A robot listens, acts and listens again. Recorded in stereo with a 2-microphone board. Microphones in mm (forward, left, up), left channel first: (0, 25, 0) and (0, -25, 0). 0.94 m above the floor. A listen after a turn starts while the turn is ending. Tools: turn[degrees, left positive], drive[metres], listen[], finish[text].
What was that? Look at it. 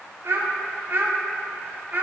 Thought: The child speaking: about 40° right or 140° right.
Action: turn[-40]
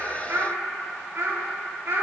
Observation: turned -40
Thought: So it is at 130° right.
Action: turn[-130]
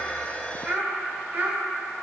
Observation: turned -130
Thought: The child speaking is now 40° right.
Action: turn[-40]
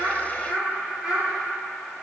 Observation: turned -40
Thought: The child speaking is now 15° right.
Action: turn[-15]
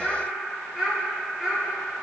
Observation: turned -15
Action: finish[Facing the child speaking.]